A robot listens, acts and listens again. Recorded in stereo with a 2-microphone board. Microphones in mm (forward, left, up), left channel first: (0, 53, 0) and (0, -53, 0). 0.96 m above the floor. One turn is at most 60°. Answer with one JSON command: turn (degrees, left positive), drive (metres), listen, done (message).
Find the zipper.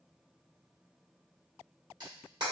{"listen": true}
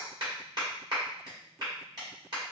{"listen": true}
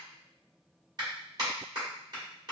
{"done": "I can't make out a zipper to turn to."}